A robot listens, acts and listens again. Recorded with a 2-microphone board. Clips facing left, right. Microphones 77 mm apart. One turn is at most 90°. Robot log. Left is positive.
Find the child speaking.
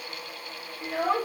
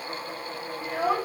cmd yaw -30
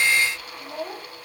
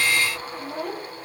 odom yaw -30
note: So it is at 135° right.
cmd yaw -90
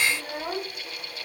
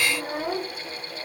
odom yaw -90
note: The child speaking is now 35° right.
cmd yaw -35
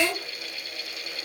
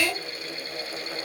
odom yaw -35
note: The child speaking is now 15° left.
cmd yaw +15
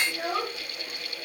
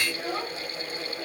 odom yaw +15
note: The child speaking is now 20° left.
cmd yaw +20
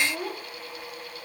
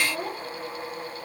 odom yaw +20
end: Facing the child speaking.